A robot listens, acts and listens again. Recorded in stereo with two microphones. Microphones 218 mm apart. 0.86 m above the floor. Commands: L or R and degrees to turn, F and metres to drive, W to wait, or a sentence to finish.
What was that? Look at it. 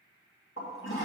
L70
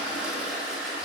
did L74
Found it: a toilet flushing, straight ahead.